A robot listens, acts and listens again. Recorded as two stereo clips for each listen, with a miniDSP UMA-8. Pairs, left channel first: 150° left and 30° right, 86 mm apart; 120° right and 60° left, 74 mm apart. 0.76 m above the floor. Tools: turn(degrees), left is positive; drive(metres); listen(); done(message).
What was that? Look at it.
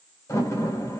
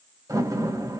turn(degrees=95)
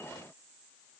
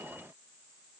done("I heard a door slam from this way, but can't make it out now.")